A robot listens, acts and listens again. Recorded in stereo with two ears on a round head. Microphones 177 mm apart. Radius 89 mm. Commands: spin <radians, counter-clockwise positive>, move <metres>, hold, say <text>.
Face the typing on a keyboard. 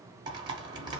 spin -0.44
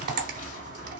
spin -2.27
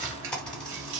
say Facing the typing on a keyboard, under 1 m away.